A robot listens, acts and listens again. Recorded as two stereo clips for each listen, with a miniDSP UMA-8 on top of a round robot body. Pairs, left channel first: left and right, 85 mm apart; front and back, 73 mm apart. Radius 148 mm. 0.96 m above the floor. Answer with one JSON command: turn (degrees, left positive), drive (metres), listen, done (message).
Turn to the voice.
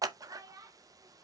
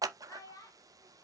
{"turn": -40}
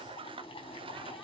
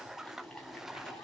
{"listen": true}
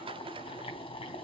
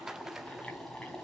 {"listen": true}
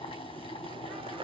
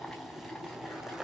{"done": "I heard a child speaking from this way, but can't make it out now."}